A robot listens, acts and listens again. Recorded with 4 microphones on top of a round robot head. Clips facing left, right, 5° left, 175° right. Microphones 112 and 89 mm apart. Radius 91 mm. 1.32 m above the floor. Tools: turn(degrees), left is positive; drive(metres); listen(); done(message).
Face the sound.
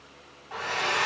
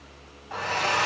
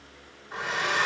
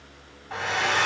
turn(degrees=-155)
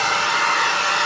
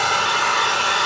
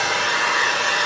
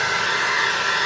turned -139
turn(degrees=-15)
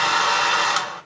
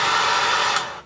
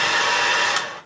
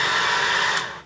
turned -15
done("Facing the hair dryer.")